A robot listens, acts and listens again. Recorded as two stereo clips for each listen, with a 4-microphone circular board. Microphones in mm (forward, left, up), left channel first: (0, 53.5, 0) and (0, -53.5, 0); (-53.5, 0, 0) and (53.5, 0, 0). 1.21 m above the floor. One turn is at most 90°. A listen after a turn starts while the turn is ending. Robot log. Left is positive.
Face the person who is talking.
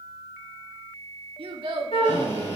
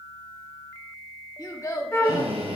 note: The child speaking: 120° right.
cmd yaw -90
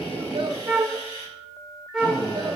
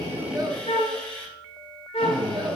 note: Nothing new. It was at 30° right.
cmd yaw -30
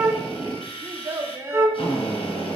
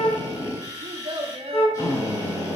note: The child speaking is now 25° right.
cmd yaw -25
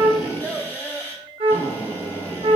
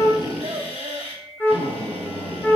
note: The child speaking is now 15° left.
cmd yaw +15
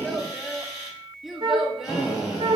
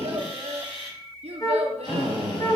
end: Found it: a child speaking, straight ahead.